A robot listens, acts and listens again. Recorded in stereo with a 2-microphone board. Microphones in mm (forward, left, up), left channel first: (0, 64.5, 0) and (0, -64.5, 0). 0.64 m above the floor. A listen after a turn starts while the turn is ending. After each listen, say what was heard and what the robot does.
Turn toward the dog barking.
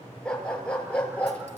Turn 30° left.
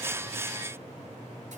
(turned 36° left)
Keep listening.
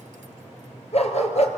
So it is at 120° left. Turn 120° left.
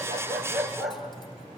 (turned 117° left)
Facing the dog barking, 2 to 4 m away.